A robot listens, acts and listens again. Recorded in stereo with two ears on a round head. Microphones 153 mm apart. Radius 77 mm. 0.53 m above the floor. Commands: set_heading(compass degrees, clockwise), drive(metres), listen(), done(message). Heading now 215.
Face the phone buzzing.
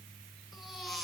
listen()
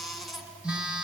set_heading(245)
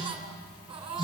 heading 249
set_heading(224)
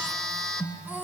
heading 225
done("Facing the phone buzzing.")